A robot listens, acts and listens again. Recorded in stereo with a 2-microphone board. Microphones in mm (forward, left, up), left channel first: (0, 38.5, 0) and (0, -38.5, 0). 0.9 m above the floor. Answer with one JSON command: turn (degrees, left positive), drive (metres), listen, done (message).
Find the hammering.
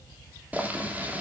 {"listen": true}
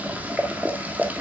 {"listen": true}
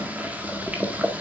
{"done": "I can't make out hammering to turn to."}